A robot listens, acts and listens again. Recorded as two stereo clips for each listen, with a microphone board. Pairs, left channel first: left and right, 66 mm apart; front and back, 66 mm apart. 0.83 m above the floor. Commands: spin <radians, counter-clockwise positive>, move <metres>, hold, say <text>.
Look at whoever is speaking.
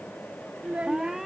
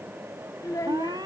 spin -0.35
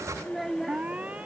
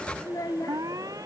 say Found it: a child speaking, straight ahead.